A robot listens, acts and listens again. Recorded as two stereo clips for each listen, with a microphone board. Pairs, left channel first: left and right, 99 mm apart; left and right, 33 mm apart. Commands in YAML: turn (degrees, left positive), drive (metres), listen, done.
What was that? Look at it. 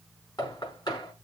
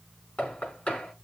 turn: 45
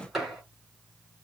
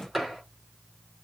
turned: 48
done: "Found it: knocking, straight ahead, over 4 m away."